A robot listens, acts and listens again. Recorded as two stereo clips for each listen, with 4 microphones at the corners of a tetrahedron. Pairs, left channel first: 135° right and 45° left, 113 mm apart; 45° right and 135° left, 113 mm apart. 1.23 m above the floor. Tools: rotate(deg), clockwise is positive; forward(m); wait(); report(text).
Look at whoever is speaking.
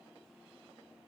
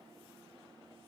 wait()
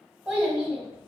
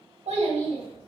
rotate(-125)
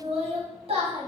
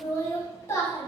rotate(-15)
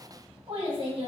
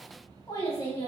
report("Found it: a child speaking, straight ahead.")